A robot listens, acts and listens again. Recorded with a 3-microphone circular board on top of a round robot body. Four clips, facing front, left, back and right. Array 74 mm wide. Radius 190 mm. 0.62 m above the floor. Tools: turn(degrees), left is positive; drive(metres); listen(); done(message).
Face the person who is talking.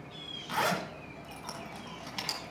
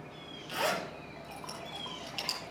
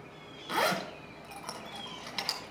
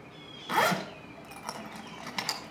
listen()
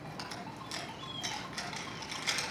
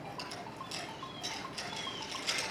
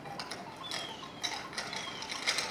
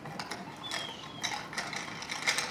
listen()
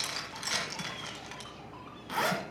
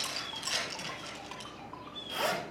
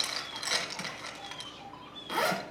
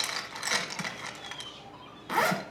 done("I can't make out anyone speaking to turn to.")